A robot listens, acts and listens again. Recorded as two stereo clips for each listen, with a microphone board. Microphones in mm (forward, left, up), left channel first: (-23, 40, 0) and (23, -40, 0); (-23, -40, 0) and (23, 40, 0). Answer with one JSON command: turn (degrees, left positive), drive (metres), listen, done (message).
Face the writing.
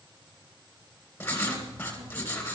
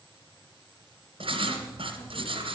{"turn": 50}
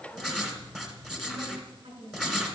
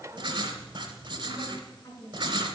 {"turn": 25}
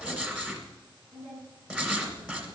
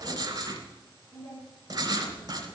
{"turn": 15}
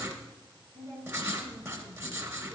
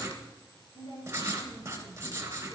{"done": "Found it: writing, straight ahead."}